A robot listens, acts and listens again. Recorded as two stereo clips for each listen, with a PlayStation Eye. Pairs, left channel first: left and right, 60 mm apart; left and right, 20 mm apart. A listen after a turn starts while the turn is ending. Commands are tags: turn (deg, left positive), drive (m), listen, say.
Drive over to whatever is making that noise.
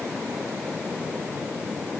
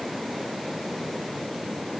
<listen/>
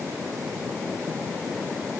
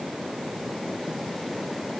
<listen/>
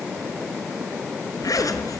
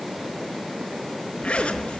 <turn deg="75"/>
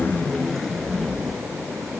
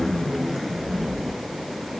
<drive m="1.0"/>
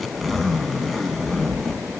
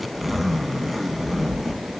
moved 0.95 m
<drive m="1.0"/>
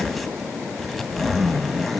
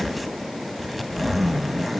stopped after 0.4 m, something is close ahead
<say>Arrived at the zipper, straight ahead.</say>